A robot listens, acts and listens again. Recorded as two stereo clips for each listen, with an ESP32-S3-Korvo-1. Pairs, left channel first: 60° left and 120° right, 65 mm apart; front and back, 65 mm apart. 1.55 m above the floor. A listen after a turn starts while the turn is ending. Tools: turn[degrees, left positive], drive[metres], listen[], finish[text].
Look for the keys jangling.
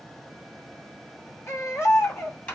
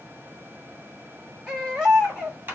Thought: The keys jangling: 125° left.
Action: turn[125]
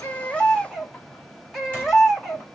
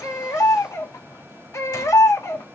Action: listen[]
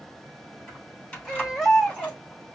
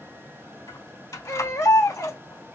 Thought: The keys jangling is now 15° right.
Action: turn[-15]
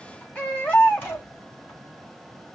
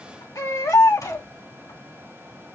Action: finish[Facing the keys jangling, 2 to 4 m away.]